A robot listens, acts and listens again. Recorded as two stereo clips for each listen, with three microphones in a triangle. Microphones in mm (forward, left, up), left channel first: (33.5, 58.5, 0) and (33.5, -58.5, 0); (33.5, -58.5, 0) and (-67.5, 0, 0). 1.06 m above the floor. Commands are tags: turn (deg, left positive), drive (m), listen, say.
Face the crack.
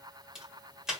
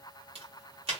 <turn deg="-175"/>
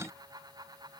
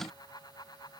<say>I heard a crack from this way, but can't make it out now.</say>